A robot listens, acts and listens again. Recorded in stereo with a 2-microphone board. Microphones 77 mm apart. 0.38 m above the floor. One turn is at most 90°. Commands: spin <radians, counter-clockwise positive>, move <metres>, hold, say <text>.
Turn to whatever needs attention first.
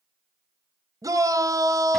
spin -0.87
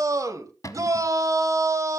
spin -1.05
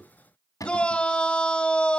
spin 0.26
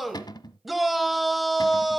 say Facing the shout, 1 to 2 m away.